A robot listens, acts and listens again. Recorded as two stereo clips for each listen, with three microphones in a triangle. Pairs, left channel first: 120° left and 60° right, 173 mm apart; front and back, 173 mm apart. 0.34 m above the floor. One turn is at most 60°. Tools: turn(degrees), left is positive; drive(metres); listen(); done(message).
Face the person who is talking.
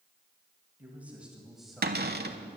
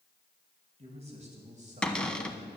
turn(degrees=-60)
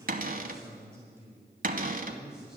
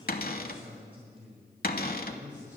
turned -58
turn(degrees=-60)
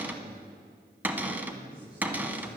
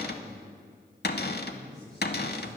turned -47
turn(degrees=-60)
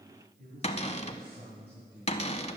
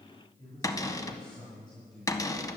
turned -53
turn(degrees=-60)
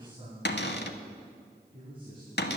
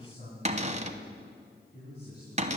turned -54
done("Found it: a man speaking, straight ahead, 2 to 4 m away.")